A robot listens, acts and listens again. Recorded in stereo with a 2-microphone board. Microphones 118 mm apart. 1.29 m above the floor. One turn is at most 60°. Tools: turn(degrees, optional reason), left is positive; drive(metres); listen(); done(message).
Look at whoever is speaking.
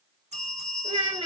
turn(degrees=-50, reason="The child speaking: about 50° right or 130° right.")
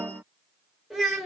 done("Found it: a child speaking, straight ahead.")